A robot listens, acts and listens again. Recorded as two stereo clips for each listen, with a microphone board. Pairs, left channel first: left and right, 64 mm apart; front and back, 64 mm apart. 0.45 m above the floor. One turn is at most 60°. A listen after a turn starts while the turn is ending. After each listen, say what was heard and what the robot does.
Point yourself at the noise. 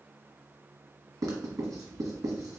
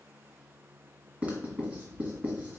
The writing: 110° right. Turn 60° right.
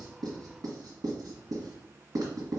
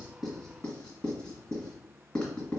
The writing is now 75° right. Turn 60° right.
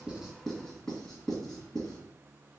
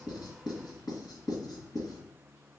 The writing is now 10° left. Turn 10° left.
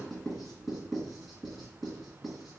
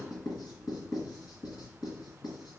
Found it: writing, straight ahead.